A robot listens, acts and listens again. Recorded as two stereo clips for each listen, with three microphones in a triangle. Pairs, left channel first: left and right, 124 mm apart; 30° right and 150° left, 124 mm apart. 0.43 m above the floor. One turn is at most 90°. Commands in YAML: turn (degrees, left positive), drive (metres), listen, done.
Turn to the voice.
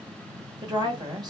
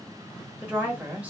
turn: -90
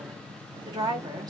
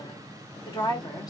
turn: -55
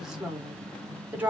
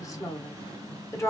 turn: -35
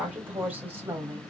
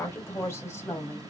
turn: -60
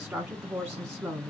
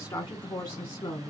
turn: -15
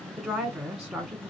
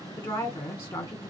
done: "Found it: a woman speaking, straight ahead, 1 to 2 m away."